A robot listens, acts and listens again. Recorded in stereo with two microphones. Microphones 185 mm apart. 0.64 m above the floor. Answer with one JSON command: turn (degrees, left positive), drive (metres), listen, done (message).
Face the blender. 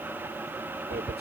{"listen": true}
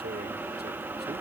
{"listen": true}
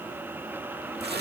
{"done": "I can't make out a blender, only tearing paper."}